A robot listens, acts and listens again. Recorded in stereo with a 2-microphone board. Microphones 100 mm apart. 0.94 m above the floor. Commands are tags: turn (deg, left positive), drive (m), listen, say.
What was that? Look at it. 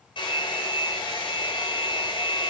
<turn deg="55"/>
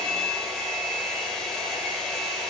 <say>Facing the hair dryer.</say>